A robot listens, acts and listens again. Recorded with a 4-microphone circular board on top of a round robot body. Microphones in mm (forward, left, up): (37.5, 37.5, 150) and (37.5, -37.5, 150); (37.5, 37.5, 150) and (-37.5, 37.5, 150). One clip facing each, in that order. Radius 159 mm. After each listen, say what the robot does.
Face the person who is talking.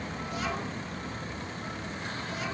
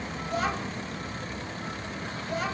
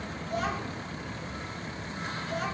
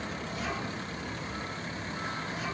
Turn 45° right.
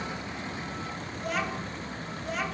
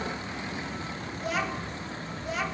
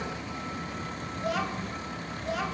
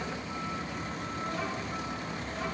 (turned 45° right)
Found it: a child speaking, straight ahead.